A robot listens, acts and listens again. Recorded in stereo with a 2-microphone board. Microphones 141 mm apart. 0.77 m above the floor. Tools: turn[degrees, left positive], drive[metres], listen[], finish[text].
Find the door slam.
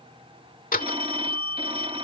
Action: turn[90]
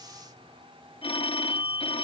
Action: finish[Facing where the door slam came from. I can't hear it now.]